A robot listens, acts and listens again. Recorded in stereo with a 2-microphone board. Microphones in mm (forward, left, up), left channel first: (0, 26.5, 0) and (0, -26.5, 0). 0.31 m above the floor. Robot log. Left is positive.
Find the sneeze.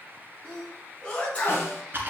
note: The sneeze: about 25° left or 155° left.
cmd yaw +25
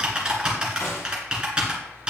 cmd idle
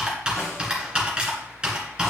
end: I heard a sneeze, but can't make it out now. It was about straight ahead or 130° left.